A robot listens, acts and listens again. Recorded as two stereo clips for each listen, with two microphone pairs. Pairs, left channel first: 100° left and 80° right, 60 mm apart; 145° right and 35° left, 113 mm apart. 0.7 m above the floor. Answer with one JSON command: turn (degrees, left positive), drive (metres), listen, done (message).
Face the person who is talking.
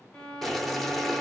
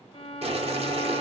{"listen": true}
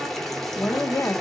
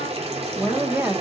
{"turn": 95}
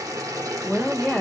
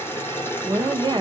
{"done": "Facing the woman speaking."}